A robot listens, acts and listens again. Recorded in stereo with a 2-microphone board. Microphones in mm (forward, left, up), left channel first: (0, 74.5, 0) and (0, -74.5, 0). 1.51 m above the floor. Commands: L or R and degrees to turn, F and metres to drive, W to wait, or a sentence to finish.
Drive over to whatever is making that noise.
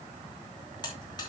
L30
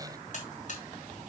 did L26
L125
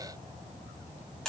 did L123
F1.0
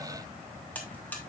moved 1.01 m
L10
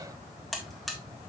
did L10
F1.0
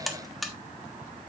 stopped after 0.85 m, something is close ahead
I am next to the buzzer.